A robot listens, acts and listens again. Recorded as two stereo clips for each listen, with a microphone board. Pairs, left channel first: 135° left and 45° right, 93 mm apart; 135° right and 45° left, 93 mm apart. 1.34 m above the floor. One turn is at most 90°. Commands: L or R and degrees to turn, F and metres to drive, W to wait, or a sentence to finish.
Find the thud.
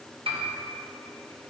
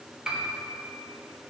W
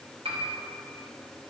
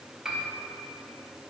W
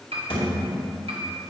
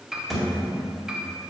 L90
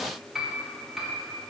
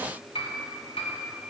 L45
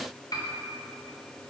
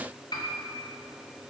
I heard a thud from this way, but can't make it out now.